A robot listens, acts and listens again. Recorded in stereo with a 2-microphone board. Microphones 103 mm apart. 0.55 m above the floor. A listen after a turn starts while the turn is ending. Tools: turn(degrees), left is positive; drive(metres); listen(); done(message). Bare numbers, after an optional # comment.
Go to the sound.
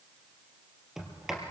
turn(-30)
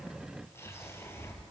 # So it is at 25° left.
turn(25)
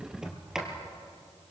drive(1.0)
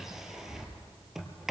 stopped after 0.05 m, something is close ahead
done("Blocked. The sliding door is further on, straight ahead.")